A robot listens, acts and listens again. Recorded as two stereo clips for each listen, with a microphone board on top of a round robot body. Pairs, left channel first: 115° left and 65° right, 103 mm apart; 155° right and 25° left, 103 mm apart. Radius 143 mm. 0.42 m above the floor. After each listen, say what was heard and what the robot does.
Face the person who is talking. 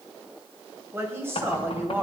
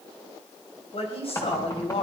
The woman speaking: 140° right. Turn 140° right.
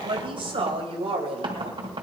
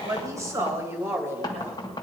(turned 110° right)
The woman speaking is now 45° right. Turn 45° right.
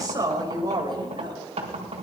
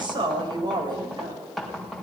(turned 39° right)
The woman speaking is now 20° right. Turn 20° right.
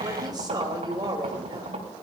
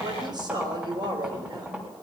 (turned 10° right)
The woman speaking is now 20° right. Turn 20° right.
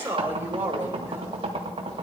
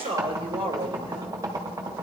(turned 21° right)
Found it: a woman speaking, straight ahead, 2 to 4 m away.